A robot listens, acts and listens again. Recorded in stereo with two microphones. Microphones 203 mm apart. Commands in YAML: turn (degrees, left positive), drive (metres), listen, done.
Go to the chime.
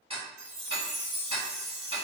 turn: -60
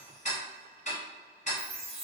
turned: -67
turn: 10
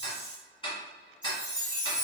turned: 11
drive: 1.0
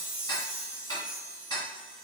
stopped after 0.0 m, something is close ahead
turn: -10
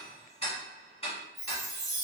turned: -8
done: "Blocked. The chime is further on, straight ahead."